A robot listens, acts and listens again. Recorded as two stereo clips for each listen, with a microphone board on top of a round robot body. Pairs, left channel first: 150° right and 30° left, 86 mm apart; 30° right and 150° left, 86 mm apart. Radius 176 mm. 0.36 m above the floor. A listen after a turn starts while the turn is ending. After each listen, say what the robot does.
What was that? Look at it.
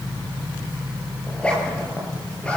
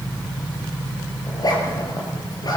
Turn 75° right.
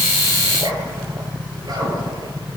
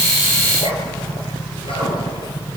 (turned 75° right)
Turn 15° right.
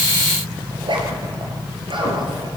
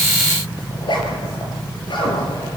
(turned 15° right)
Facing the zipper, over 4 m away.